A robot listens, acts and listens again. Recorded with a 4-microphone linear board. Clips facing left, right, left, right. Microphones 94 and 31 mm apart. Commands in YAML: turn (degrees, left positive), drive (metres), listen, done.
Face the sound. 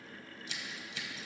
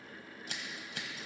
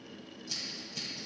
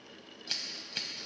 turn: -55
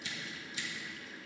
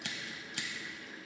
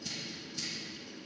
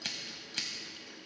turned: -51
turn: -75
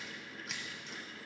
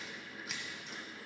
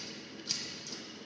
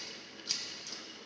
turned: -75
done: "Found it: scissors, straight ahead."